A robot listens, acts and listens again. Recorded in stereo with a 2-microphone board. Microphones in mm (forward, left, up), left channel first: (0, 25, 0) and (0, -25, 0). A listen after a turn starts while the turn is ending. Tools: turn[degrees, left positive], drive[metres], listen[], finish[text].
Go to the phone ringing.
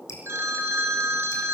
Thought: The phone ringing: about 50° right or 130° right.
Action: turn[-50]
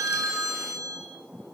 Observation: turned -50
Thought: So it is at 75° right.
Action: turn[-75]
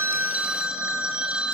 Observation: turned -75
Thought: The phone ringing is now 20° right.
Action: turn[-20]
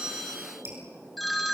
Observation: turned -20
Action: drive[1.0]
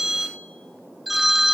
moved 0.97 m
Action: drive[1.0]
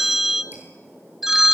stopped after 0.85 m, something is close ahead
Action: finish[Arrived at the phone ringing, straight ahead.]